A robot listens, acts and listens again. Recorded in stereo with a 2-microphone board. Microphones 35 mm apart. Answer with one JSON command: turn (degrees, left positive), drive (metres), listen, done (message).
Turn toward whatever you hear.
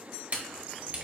{"turn": -40}
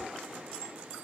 {"listen": true}
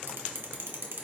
{"turn": -95}
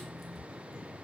{"done": "Facing the camera shutter."}